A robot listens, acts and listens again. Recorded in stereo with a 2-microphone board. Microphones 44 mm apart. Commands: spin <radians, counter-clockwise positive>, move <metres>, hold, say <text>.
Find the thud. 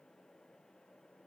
hold
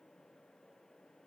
hold
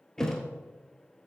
spin 0.52
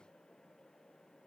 hold
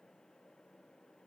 say I heard a thud, but can't make it out now. It was about 20° right or 140° left.